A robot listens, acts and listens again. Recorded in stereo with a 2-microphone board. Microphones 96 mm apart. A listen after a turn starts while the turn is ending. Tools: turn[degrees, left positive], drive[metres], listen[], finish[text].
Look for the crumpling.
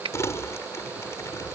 Thought: The crumpling: about 30° left or 150° left.
Action: turn[30]
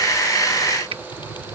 Thought: So it is at 120° left.
Action: turn[120]
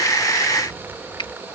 Thought: The crumpling is now 20° right.
Action: turn[-20]
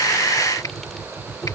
Action: finish[Found it: crumpling, straight ahead.]